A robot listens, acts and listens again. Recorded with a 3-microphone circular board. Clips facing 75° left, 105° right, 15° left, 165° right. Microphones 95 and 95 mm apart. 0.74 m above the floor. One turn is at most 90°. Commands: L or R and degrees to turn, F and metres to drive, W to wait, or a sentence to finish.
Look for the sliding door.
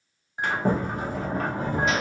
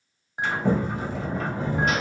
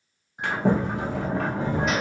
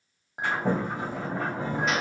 L30
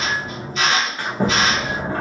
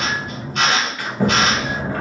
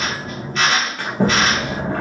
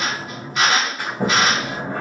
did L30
L15
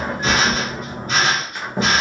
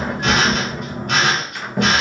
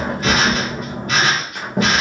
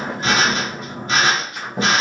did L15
Facing the sliding door, under 1 m away.